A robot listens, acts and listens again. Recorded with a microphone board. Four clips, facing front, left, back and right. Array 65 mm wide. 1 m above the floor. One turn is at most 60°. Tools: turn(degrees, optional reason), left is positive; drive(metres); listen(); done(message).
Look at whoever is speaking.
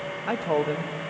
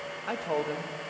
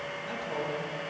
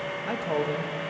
done("Facing the man speaking.")